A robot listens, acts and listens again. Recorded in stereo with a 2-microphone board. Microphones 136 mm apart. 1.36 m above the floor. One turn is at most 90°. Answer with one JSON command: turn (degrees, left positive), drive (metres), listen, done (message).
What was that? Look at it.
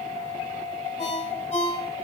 {"turn": 55}
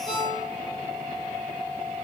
{"done": "Facing the ringtone, 2 to 4 m away."}